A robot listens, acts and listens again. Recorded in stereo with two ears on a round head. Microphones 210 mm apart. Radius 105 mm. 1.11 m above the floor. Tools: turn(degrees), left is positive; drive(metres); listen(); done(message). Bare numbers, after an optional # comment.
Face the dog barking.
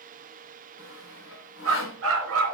# The dog barking: about 60° right or 120° right.
turn(-60)
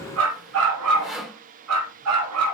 # So it is at 75° right.
turn(-75)
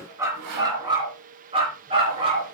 # The dog barking is now 25° right.
turn(-25)
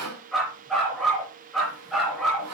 done("Facing the dog barking, 2 to 4 m away.")